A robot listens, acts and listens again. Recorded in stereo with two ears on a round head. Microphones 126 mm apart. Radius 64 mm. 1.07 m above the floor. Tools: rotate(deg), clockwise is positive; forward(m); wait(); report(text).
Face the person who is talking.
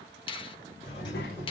rotate(-75)
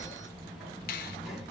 report("Found it: a child speaking, straight ahead.")